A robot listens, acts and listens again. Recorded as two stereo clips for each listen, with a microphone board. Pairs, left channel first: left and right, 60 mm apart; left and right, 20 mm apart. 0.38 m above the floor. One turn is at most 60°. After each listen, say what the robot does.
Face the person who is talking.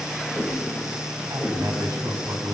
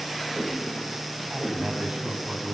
Turn 60° right.
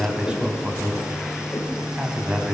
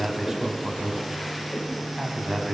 Turn 15° right.
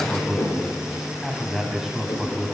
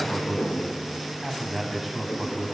Facing the man speaking.